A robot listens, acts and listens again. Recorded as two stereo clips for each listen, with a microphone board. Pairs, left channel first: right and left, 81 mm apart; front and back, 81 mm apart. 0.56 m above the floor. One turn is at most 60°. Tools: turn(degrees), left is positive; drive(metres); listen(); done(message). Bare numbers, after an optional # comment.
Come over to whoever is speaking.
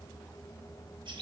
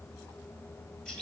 listen()
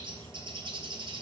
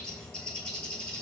listen()
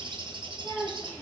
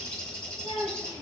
drive(1.0)
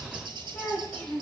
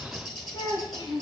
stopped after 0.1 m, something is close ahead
# The child speaking is now 10° right.
turn(-10)
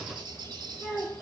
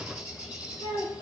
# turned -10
done("Blocked. The child speaking is further on, straight ahead.")